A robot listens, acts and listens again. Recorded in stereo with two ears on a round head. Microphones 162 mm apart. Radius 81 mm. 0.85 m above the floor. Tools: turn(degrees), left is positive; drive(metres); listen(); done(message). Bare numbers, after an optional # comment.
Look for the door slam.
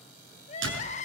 # The door slam: about 75° right or 105° right.
turn(-75)
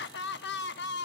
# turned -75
listen()
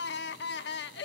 done("I heard a door slam, but can't make it out now. It was about straight ahead or 30° right.")